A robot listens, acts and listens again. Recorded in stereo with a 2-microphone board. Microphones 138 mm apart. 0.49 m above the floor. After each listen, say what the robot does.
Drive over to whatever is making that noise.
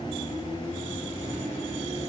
Keep listening.
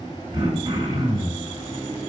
Turn 30° right.
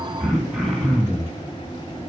Drive 1.0 m forward.
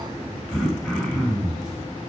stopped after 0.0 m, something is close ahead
Blocked. The throat clearing is further on, straight ahead.